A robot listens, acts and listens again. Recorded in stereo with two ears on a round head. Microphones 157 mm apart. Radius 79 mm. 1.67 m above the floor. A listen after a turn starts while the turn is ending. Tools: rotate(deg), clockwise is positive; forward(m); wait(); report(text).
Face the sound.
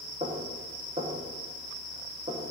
rotate(35)
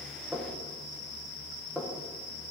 report("Facing the knocking, 1 to 2 m away.")